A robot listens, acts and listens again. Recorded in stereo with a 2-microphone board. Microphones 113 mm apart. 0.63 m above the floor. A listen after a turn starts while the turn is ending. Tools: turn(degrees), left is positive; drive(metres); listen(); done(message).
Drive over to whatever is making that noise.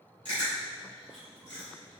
turn(degrees=-55)
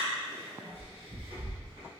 turn(degrees=-75)
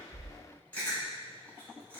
turn(degrees=15)
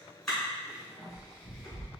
drive(metres=1.0)
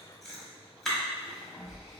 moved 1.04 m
drive(metres=1.0)
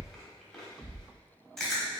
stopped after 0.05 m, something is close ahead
done("Arrived at the chewing, straight ahead.")